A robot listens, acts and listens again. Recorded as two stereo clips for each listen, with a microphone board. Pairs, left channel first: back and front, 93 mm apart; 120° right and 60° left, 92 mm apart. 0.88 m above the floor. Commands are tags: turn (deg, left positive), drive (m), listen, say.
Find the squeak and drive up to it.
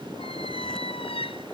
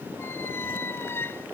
<turn deg="175"/>
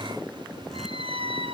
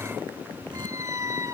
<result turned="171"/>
<drive m="1.0"/>
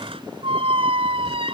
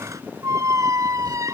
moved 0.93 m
<drive m="1.0"/>
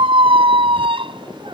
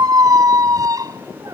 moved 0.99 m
<turn deg="10"/>
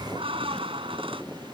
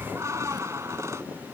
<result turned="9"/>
<drive m="1.0"/>
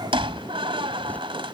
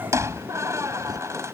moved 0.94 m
<drive m="1.0"/>
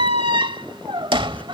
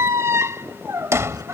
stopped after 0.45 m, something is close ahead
<say>Arrived at the squeak, straight ahead.</say>